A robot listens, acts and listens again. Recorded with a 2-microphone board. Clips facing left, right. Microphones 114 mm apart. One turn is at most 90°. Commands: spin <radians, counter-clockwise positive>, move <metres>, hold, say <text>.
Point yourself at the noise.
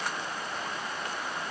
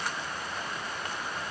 hold
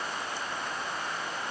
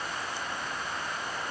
hold
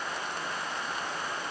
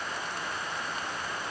say I can't make out anything to turn to.